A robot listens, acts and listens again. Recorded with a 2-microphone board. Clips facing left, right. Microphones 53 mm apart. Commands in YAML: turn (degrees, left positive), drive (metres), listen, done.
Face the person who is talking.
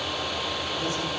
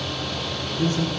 turn: -50
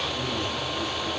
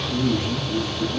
turn: -80
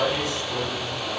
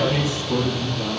turn: -25
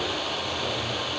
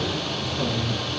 listen: true
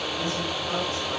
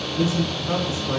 turn: -15
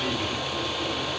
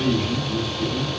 done: "Facing the man speaking."